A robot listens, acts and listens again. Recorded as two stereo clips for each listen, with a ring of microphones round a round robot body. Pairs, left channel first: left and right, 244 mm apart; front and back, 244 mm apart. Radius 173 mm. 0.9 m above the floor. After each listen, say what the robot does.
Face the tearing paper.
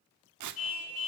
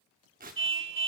Turn 110° right.
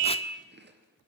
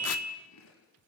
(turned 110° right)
Keep listening.
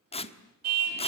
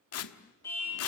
Turn 20° left.
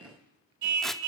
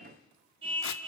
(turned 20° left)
Keep listening.
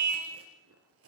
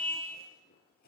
Keep listening.
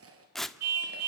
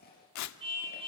Facing the tearing paper.